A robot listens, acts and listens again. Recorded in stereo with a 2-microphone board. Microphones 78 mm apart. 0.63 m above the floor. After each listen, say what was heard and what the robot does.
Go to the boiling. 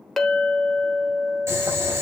The boiling: about 35° right or 145° right. Turn 35° right.
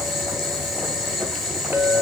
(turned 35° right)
Drive 1.0 m forward.
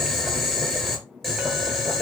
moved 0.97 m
Drive 1.0 m forward.
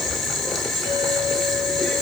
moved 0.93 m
Drive 1.0 m forward.
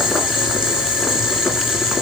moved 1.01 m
The boiling is now 10° right. Turn 10° right.
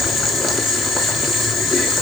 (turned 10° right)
Drive 1.0 m forward.
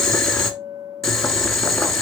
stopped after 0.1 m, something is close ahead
Arrived at the boiling, straight ahead.